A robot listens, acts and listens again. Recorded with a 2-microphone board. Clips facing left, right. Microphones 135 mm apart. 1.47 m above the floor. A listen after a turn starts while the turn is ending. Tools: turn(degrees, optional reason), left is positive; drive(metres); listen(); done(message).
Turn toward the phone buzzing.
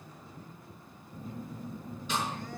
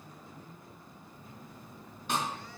turn(degrees=50, reason="The phone buzzing: about 50° left or 130° left.")
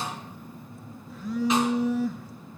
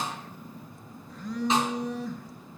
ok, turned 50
done("Facing the phone buzzing, under 1 m away.")